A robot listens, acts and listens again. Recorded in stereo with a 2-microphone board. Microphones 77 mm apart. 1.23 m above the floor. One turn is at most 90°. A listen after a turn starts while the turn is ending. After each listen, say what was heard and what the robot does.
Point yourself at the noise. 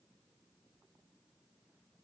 Keep listening.
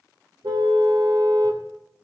The car horn: about 75° right or 105° right. Turn 75° right.
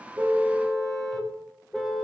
Facing the car horn.